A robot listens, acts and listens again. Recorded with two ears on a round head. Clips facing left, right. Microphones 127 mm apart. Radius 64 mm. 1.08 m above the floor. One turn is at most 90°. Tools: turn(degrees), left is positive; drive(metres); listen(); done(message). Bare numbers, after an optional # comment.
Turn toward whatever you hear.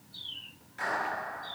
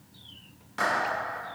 turn(-90)
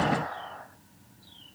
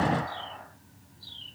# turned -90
done("Found it: a clap, straight ahead.")